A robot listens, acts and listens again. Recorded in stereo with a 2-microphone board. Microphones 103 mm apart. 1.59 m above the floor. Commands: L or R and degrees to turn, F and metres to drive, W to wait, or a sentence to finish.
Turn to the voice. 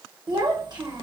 R45
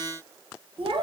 R80
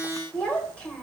L10
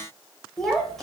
Facing the child speaking.